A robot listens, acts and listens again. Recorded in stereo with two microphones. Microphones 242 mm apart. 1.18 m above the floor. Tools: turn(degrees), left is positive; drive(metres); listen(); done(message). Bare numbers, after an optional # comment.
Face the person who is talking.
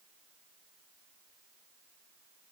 listen()
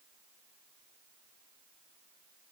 listen()
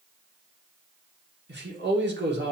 # The man speaking: about 45° right or 135° right.
turn(-45)
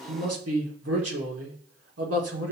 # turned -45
# So it is at 85° right.
turn(-85)
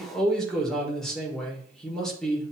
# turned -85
done("Facing the man speaking, 1 to 2 m away.")